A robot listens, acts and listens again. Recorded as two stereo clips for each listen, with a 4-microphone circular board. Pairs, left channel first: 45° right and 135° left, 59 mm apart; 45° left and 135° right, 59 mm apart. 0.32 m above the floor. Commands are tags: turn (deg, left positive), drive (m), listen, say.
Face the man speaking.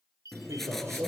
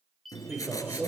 <turn deg="165"/>
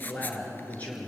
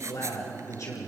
<turn deg="20"/>
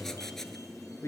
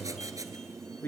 <say>Facing the man speaking, over 4 m away.</say>